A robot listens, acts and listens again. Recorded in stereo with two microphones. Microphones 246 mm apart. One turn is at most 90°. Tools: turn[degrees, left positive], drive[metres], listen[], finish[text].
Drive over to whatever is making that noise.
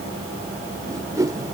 Action: turn[-30]
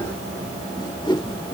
Thought: So it is at 20° left.
Action: turn[20]
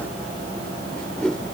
Action: drive[1.0]
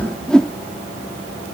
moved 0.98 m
Action: drive[1.0]
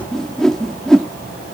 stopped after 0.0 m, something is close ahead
Action: finish[I am next to the whoosh.]